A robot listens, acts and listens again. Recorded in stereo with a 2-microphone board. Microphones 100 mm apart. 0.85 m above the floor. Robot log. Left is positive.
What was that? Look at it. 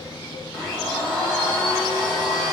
note: The blender: about 15° left or 165° left.
cmd yaw +15
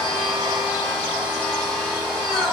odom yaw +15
end: Facing the blender.